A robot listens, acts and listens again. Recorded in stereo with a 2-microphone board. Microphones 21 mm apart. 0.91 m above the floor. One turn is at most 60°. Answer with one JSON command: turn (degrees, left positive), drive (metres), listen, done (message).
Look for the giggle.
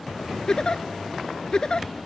{"turn": 35}
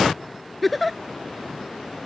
{"done": "Found it: a giggle, straight ahead."}